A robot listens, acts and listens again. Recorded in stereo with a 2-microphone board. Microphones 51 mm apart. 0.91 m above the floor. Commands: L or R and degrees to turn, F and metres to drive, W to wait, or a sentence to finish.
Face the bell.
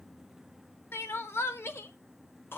W
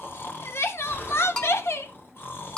L30
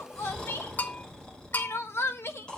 L135
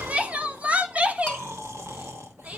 W
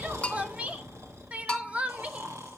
L30
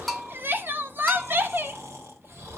Facing the bell.